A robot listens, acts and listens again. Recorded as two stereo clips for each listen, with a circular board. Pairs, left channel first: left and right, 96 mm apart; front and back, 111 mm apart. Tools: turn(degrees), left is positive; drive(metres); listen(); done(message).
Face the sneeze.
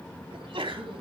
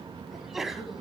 turn(degrees=-90)
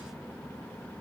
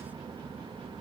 done("Facing where the sneeze came from. I can't hear it now.")